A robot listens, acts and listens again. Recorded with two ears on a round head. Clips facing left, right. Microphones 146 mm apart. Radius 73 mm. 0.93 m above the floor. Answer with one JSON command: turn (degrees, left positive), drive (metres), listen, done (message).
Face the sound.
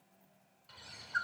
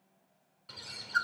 {"turn": -70}
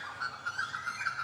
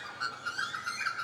{"turn": -40}
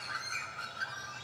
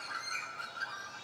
{"done": "Facing the bird."}